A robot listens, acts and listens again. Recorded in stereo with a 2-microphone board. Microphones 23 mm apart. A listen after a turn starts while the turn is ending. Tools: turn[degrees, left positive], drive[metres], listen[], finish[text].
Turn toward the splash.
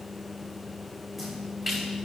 Thought: The splash: about 20° right or 160° right.
Action: turn[-20]
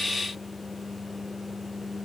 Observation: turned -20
Action: listen[]
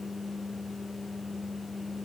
Action: finish[I heard a splash, but can't make it out now. It was about straight ahead or 140° right.]